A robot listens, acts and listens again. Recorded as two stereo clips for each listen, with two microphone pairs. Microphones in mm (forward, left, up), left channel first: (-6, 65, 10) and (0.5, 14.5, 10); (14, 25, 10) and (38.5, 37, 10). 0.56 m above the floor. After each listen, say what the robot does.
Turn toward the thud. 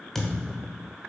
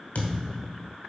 Turn 180° left.
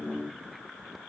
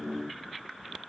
Facing where the thud came from. I can't hear it now.